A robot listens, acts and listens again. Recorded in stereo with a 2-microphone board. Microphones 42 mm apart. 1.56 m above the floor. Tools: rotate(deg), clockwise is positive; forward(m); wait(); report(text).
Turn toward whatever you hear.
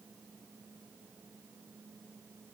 wait()
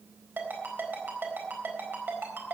rotate(55)
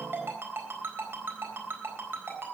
rotate(70)
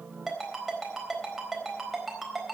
report("Found it: a ringtone, straight ahead.")